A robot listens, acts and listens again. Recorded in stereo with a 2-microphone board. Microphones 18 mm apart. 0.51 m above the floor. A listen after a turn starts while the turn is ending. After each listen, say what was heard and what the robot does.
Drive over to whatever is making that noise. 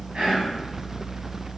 The whispering: about 70° right or 110° right. Turn 70° right.
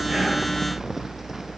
Keep listening.
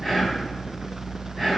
Drive 1.0 m forward.
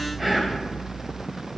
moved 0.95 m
The whispering is now 10° right. Turn 10° right.
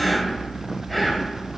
Drive 1.0 m forward.
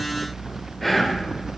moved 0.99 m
Drive 1.0 m forward.
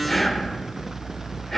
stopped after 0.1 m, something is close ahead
The whispering is now 10° left. Turn 10° left.
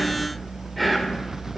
I am next to the whispering.